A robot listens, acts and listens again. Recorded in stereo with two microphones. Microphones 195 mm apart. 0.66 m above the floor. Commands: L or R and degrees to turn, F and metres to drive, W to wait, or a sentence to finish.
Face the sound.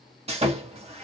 R30
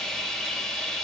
Facing the sawing.